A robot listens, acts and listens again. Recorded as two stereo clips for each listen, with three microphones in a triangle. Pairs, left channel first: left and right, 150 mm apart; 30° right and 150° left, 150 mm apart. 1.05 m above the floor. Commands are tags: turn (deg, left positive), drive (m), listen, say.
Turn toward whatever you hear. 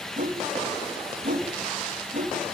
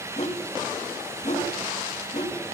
<turn deg="-65"/>
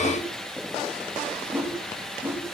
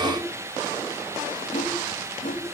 <turn deg="-15"/>
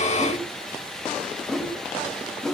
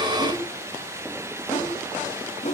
<say>Facing the whoosh, 2 to 4 m away.</say>